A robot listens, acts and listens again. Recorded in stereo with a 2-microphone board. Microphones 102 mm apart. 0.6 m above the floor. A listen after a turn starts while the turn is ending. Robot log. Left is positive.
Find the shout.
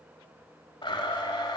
cmd idle
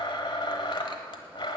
cmd idle
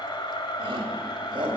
note: The shout: about 55° right or 125° right.
cmd yaw -55
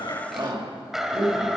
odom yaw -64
note: So it is at 60° right.
cmd yaw -60
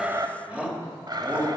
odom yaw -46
note: The shout is now 15° right.
cmd yaw -15
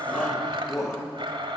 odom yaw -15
end: Found it: a shout, straight ahead, 2 to 4 m away.